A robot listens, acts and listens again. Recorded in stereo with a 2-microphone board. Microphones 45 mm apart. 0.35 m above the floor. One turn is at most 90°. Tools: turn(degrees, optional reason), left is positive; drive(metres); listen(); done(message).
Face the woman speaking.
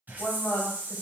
turn(degrees=45, reason="The woman speaking: about 45° left or 135° left.")
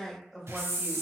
done("Found it: a woman speaking, straight ahead.")